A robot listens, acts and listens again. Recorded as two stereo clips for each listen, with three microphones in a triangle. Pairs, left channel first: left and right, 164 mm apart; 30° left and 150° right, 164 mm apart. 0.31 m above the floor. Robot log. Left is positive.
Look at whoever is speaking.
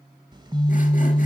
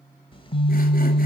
cmd idle
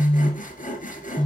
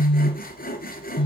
cmd idle
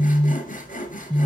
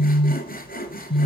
end: I can't make out anyone speaking to turn to.